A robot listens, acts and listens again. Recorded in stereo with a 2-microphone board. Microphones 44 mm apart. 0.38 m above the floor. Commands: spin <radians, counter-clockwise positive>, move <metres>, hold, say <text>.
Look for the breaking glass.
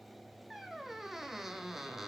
hold
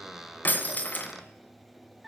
spin 0.79
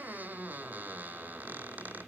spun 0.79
hold
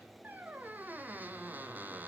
say I heard breaking glass, but can't make it out now. It was about straight ahead or 90° left.